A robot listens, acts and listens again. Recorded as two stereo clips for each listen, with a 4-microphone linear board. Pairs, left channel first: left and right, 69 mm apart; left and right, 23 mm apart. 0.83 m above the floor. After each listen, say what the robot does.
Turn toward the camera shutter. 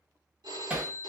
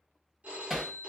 Keep listening.
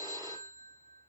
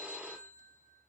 Keep listening.
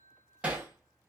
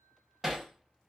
I can't make out a camera shutter, only hammering and a phone ringing.